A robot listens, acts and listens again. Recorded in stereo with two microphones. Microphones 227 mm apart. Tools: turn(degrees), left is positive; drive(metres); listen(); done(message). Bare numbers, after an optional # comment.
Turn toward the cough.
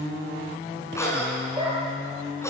turn(30)
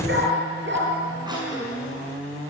# So it is at 15° right.
turn(-15)
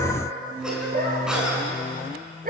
done("Facing the cough.")